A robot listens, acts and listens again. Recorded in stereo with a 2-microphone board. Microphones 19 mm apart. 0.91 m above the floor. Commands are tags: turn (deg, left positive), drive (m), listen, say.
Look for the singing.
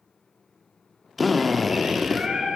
<turn deg="-60"/>
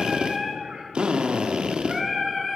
<say>Facing the singing.</say>